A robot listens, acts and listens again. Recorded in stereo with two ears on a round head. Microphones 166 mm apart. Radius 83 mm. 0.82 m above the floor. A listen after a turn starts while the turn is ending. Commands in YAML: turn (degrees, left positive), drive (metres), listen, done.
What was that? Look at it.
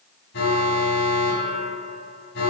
turn: 65
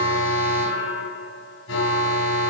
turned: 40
turn: 75
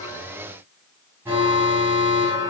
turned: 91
turn: -15
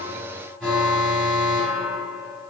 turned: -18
done: "Found it: an alarm, straight ahead."